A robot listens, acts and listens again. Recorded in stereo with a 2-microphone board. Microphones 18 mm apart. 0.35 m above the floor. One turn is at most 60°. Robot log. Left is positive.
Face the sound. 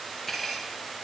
cmd yaw +30
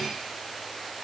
cmd idle
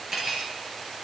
note: So it is at 25° right.
cmd yaw -25
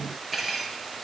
end: Found it: cutlery clinking, straight ahead, 2 to 4 m away.